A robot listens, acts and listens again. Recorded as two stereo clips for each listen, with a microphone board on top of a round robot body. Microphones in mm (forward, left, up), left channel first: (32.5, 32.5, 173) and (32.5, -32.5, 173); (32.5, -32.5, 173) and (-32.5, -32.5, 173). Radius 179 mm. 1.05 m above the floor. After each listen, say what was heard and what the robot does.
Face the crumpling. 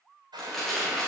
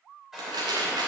The crumpling: 175° left. Turn 175° left.
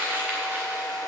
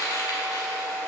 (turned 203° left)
The crumpling is now 30° right. Turn 30° right.
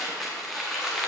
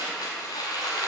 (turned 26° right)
Facing the crumpling, under 1 m away.